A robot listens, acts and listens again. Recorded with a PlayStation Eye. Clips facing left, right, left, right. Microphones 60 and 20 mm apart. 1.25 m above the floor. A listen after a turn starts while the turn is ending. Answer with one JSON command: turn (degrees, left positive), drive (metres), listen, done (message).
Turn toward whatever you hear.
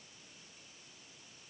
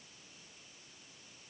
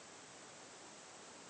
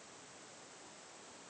{"listen": true}
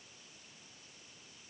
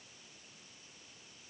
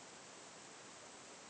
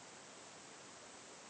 {"listen": true}
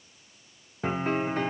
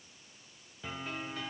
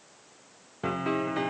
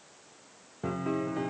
{"turn": 50}
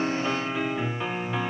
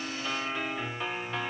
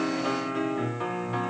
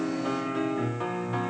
{"done": "Facing the piano."}